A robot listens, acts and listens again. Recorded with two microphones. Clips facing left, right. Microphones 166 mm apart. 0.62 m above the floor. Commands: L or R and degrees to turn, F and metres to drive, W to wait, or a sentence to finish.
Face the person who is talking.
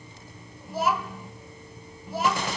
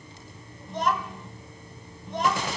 L30
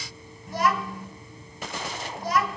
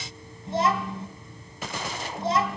R25
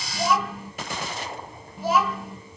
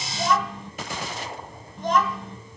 Facing the child speaking, 2 to 4 m away.